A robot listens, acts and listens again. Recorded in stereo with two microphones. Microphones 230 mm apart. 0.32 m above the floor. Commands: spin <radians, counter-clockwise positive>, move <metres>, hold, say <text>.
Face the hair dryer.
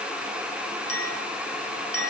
hold
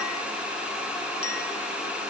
hold
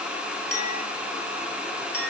say I can't make out a hair dryer, only a clink.